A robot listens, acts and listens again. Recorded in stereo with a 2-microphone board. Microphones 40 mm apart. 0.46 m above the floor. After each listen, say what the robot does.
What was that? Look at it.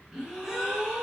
Turn 30° right.
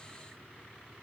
Keep listening.
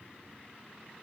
I heard a gasp, but can't make it out now. It was about 20° left or 140° right.